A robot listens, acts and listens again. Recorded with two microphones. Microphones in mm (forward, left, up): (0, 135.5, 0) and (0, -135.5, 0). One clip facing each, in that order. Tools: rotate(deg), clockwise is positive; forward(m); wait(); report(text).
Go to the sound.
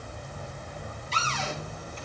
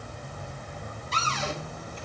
rotate(55)
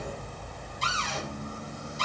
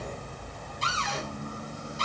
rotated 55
rotate(70)
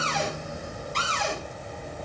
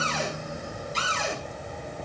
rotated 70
forward(1.0)
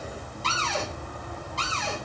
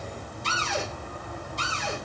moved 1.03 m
rotate(15)
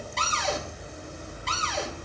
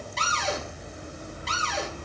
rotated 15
forward(1.0)
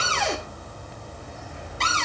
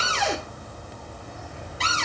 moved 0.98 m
forward(1.0)
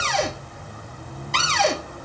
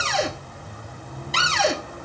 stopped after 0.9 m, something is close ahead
report("Arrived at the cupboard door, straight ahead.")